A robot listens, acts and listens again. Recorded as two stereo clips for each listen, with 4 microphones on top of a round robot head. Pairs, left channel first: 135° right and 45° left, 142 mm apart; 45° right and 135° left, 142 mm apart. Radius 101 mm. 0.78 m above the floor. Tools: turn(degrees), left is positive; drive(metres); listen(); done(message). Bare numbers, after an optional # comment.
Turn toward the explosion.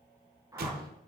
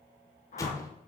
# The explosion: 25° left.
turn(25)
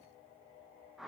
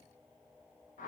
done("I heard an explosion from this way, but can't make it out now.")